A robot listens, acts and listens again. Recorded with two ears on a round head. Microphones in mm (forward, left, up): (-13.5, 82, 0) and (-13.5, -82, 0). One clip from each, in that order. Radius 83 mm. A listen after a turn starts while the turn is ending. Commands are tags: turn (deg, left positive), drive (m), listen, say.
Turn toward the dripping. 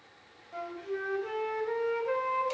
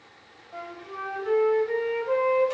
<listen/>
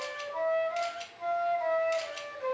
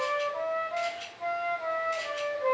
<listen/>
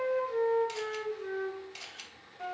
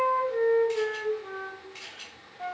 <say>I can't make out dripping to turn to.</say>